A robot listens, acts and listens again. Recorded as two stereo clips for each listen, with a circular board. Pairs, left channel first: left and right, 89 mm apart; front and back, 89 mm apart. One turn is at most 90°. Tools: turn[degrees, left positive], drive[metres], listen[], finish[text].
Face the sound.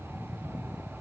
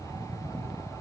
Action: listen[]
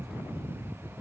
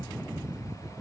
Action: listen[]
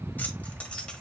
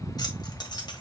Thought: The keys jangling: 15° left.
Action: turn[15]
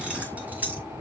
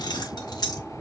Thought: The keys jangling is now 25° right.
Action: turn[-25]
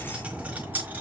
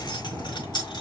Thought: The keys jangling is now 25° right.
Action: turn[-25]
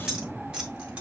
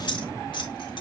Thought: The keys jangling is now 15° right.
Action: turn[-15]
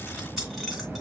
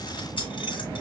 Action: finish[Facing the keys jangling, 1 to 2 m away.]